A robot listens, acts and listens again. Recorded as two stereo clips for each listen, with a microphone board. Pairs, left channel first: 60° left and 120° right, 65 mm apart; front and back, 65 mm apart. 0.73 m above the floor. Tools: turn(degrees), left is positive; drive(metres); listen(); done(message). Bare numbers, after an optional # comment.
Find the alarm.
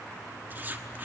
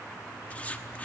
listen()
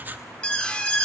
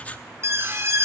# The alarm: 135° left.
turn(135)
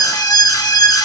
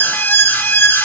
# The alarm is now 55° left.
turn(55)
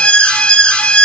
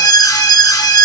# The alarm is now 10° right.
turn(-10)
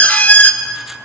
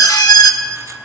done("Facing the alarm, 1 to 2 m away.")